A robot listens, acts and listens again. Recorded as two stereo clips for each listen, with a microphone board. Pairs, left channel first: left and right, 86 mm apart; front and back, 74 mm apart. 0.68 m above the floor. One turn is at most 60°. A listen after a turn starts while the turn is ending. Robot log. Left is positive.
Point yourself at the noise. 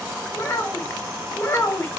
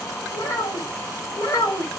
note: The child speaking: 35° left.
cmd yaw +35
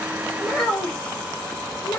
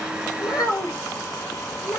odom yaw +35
note: The child speaking is now 25° left.
cmd yaw +25
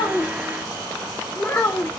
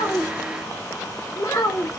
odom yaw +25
note: The child speaking is now 25° left.
cmd yaw +25
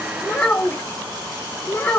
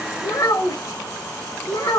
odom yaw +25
note: The child speaking is now 25° left.
cmd yaw +25
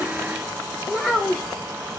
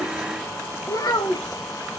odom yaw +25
end: Facing the child speaking, 1 to 2 m away.